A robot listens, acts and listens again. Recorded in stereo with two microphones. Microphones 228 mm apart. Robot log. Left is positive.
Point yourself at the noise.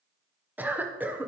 cmd yaw -30
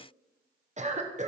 note: So it is at 145° right.
cmd yaw -145
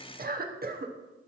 note: The cough is now 50° right.
cmd yaw -50
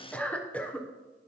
end: Facing the cough.